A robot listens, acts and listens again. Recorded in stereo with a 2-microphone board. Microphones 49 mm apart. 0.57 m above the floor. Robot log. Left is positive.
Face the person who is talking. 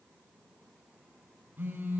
cmd idle
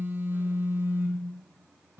cmd idle
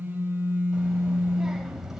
cmd yaw -30
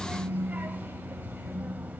note: So it is at 145° right.
cmd yaw -145
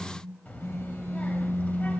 note: The child speaking is now 30° left.
cmd yaw +30
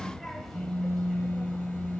end: Facing the child speaking, 1 to 2 m away.